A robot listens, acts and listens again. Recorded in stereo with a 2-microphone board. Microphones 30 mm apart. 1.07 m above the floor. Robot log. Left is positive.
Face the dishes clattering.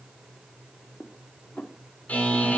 note: The dishes clattering: about 60° left or 120° left.
cmd yaw +60
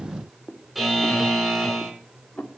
note: So it is at 60° left.
cmd yaw +60
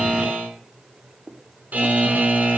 end: Found it: dishes clattering, straight ahead, 1 to 2 m away.